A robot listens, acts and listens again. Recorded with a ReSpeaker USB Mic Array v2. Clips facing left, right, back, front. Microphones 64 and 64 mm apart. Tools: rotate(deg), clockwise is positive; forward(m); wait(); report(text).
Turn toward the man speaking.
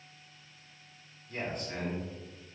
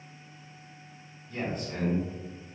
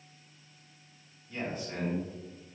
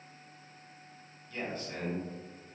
rotate(-110)
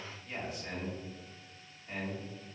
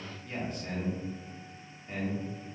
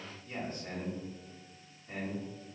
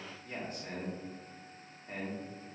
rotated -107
report("Facing the man speaking, 1 to 2 m away.")